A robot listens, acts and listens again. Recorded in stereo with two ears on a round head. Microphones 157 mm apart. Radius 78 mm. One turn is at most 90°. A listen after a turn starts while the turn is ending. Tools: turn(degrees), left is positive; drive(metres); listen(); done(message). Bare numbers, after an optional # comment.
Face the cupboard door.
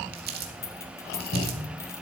turn(90)
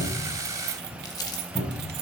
# So it is at 10° left.
turn(10)
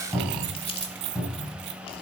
done("Found it: a cupboard door, straight ahead.")